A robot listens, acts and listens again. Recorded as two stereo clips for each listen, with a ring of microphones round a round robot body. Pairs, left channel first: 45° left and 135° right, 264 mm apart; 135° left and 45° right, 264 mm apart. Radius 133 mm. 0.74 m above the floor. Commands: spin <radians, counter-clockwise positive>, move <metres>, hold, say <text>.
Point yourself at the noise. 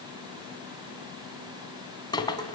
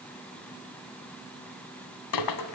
spin 2.09
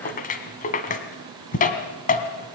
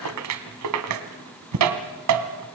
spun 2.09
spin -0.26
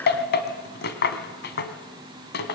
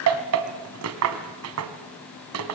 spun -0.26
spin -0.17
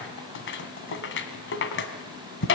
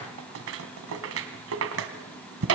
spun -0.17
say Facing the rattle, 2 to 4 m away.